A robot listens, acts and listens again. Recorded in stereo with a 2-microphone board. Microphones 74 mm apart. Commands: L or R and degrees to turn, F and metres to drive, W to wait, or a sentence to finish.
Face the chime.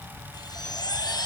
L65
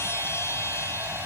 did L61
L35
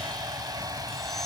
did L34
W
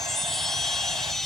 Found it: a chime, straight ahead, 2 to 4 m away.